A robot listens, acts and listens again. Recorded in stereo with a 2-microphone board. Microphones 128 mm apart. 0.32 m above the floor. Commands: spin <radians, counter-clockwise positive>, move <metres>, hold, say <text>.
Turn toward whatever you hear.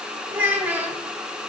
spin -0.52
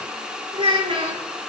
spin -2.27
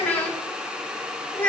spin 0.26
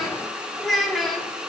say Facing the child speaking, 1 to 2 m away.